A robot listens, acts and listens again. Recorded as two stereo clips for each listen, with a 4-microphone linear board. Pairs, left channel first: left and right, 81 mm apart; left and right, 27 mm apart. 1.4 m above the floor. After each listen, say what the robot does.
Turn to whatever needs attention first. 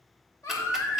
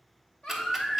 Turn 40° left.
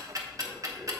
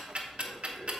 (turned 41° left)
Keep listening.
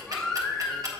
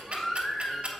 Facing the baby crying.